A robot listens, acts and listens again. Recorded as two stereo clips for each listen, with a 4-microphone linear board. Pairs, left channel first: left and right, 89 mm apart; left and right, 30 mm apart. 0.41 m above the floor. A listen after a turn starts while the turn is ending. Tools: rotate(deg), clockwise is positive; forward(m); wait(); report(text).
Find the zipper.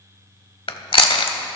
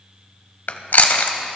wait()
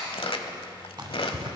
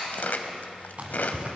rotate(55)
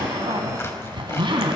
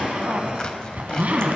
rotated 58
rotate(65)
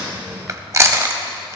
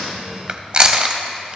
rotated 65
wait()
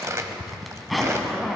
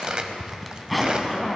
report("Facing the zipper, 1 to 2 m away.")